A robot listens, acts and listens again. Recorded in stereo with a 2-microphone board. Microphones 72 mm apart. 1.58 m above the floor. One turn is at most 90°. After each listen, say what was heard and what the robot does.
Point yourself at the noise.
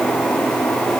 Keep listening.
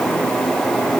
Keep listening.
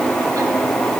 I can't make out anything to turn to.